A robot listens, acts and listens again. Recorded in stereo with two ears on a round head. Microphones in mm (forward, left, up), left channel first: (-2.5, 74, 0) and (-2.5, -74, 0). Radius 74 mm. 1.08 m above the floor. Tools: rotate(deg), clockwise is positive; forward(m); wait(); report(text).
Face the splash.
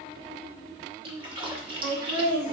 rotate(30)
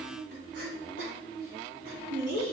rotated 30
wait()
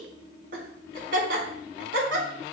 report("I heard a splash, but can't make it out now. It was about straight ahead or 120° right.")